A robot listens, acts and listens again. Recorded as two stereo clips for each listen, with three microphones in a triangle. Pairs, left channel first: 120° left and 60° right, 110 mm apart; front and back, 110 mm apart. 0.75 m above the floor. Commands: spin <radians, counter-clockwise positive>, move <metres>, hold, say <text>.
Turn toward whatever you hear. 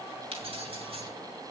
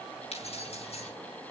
spin -0.52
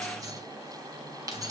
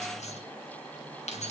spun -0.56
say Facing the keys jangling, over 4 m away.